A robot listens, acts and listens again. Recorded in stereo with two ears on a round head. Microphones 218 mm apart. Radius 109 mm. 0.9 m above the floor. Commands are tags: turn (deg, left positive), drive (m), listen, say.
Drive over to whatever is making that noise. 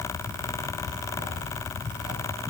<listen/>
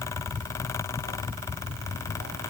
<listen/>
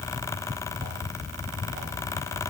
<say>I can't make out anything.</say>